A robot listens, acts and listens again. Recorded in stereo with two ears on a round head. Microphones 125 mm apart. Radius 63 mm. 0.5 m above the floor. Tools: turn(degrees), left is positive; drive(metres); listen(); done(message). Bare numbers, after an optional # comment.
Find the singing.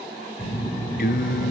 # The singing: about 65° left or 115° left.
turn(65)
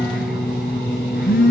done("Found it: singing, straight ahead.")